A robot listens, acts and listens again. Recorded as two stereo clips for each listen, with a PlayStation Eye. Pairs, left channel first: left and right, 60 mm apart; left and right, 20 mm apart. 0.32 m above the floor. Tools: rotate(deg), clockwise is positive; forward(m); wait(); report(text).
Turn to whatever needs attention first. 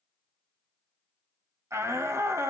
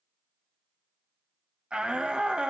rotate(55)
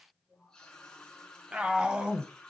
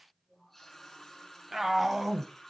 rotate(20)
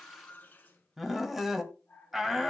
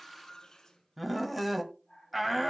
report("Facing the shout, 1 to 2 m away.")